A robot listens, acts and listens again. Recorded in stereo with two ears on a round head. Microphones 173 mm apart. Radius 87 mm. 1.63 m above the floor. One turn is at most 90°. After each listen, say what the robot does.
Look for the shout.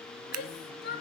Turn 55° left.
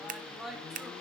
Found it: a shout, straight ahead, 2 to 4 m away.